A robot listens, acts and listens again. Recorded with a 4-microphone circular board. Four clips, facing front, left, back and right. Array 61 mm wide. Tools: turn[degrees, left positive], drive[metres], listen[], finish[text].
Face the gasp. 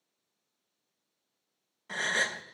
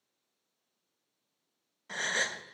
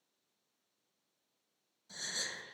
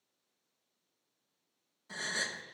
Thought: The gasp: 30° left.
Action: turn[30]
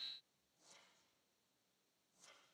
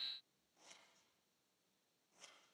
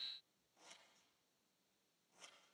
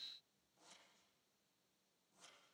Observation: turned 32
Action: finish[I heard a gasp from this way, but can't make it out now.]